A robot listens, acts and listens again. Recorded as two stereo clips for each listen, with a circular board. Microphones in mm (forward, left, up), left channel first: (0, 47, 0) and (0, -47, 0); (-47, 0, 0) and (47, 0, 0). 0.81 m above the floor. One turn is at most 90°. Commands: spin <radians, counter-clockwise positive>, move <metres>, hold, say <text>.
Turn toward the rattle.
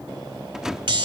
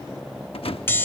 spin -1.57
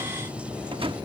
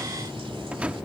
spin -1.31
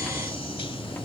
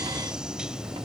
hold
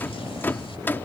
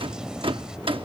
spin 0.35
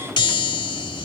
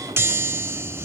hold
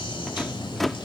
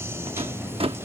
say Facing the rattle.